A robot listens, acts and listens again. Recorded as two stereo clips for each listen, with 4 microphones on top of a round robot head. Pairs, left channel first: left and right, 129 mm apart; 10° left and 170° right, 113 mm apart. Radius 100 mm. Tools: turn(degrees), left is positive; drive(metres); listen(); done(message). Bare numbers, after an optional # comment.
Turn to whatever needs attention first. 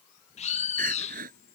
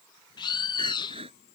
# The crying: 120° right.
turn(-120)
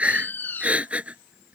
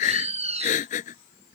# The crying is now 10° right.
turn(-10)
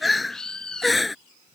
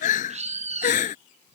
done("Found it: crying, straight ahead.")